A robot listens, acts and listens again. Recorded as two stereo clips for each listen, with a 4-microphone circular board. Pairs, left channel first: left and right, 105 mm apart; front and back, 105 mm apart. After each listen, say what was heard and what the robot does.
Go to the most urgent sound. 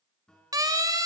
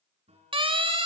The siren: 145° right. Turn 145° right.
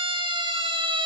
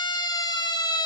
The siren is now 50° right. Turn 50° right.
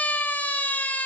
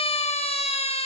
The siren is now 15° left. Turn 15° left.
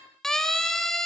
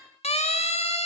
Drive 1.0 m forward.
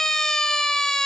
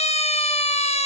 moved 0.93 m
Drive 1.0 m forward.
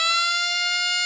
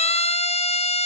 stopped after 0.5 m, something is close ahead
Arrived at the siren, straight ahead.